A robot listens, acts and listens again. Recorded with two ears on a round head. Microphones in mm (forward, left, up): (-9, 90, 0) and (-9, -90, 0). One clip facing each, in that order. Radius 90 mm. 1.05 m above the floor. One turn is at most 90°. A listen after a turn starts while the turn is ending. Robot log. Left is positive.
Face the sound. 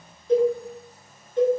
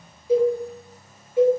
cmd yaw -30
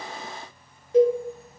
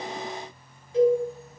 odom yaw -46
note: So it is at 40° left.
cmd yaw +40
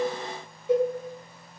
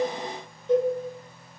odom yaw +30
note: The cowbell is now 10° left.
cmd yaw +10
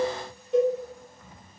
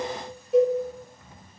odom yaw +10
end: Facing the cowbell, 2 to 4 m away.